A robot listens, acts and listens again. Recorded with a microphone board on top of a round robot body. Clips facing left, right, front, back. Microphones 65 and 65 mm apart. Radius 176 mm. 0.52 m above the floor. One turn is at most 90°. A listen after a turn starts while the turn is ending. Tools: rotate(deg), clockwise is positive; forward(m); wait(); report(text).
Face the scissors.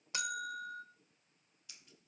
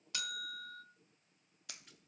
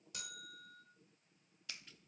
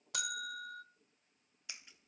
rotate(90)
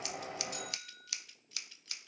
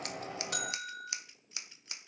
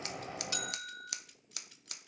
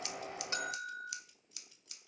rotate(20)
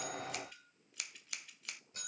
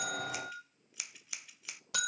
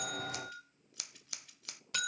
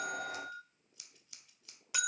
report("Found it: scissors, straight ahead, under 1 m away.")